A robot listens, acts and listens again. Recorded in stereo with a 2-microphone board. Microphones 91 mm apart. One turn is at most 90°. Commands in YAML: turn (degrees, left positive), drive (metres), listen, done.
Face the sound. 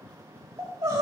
turn: -45
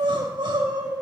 turn: -85
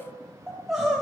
done: "Facing the crying, 2 to 4 m away."